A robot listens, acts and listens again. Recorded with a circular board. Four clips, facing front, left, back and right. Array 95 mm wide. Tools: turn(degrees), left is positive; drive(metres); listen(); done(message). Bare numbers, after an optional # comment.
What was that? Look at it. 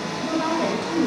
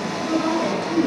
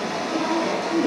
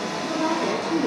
# The woman speaking: 25° left.
turn(25)
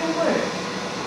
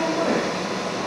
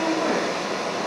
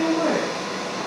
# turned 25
done("Found it: a woman speaking, straight ahead, 2 to 4 m away.")